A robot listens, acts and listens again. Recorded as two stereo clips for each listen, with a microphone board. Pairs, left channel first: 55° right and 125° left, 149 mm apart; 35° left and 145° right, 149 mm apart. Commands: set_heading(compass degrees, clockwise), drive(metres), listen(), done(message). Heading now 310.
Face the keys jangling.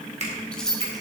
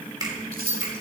set_heading(95)
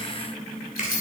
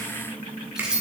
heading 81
set_heading(141)
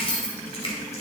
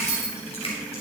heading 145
set_heading(155)
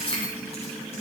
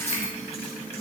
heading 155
done("Found it: keys jangling, straight ahead.")